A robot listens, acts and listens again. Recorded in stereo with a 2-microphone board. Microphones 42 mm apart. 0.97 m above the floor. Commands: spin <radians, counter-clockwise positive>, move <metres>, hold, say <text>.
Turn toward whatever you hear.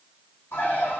spin 1.57
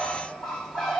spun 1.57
spin 0.17
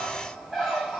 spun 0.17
say Facing the bird.